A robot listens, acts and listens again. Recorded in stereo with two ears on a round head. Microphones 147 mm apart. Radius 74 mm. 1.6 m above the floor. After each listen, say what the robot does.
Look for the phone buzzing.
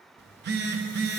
Turn 90° right.
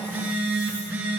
Turn 10° right.
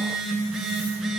Facing the phone buzzing.